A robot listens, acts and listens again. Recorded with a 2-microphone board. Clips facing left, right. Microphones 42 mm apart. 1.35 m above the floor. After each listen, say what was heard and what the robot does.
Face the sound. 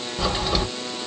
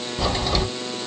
Turn 30° left.
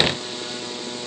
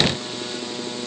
Keep listening.
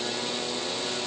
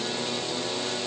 I heard a crack, but can't make it out now. It was about 20° right or 140° left.